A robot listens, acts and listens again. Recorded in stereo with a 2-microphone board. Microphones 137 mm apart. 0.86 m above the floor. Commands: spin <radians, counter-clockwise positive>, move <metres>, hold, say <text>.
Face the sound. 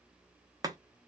spin -0.44
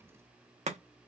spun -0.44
spin -2.18
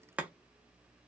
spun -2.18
spin -0.17
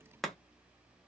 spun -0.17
say Facing the chopping.